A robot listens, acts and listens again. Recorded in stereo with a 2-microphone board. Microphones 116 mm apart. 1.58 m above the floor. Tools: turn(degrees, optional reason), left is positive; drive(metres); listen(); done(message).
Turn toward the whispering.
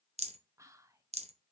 turn(degrees=-25, reason="The whispering: about 25° right or 155° right.")
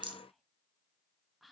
done("Found it: whispering, straight ahead.")